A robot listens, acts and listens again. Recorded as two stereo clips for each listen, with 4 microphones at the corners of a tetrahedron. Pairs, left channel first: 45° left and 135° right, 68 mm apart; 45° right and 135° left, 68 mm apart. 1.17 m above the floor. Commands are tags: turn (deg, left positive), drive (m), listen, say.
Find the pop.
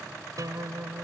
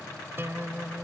<listen/>
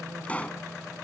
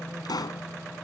<turn deg="-25"/>
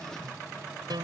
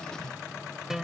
<say>I heard a pop from this way, but can't make it out now.</say>